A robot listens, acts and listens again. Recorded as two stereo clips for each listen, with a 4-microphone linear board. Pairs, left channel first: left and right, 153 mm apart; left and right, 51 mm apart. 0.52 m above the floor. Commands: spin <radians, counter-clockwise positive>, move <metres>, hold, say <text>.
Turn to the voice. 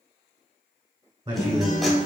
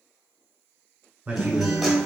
spin -0.52
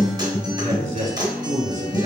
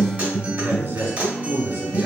spin -2.01
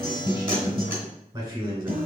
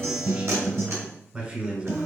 spin -0.61
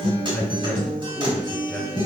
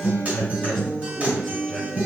say Facing the man speaking, 1 to 2 m away.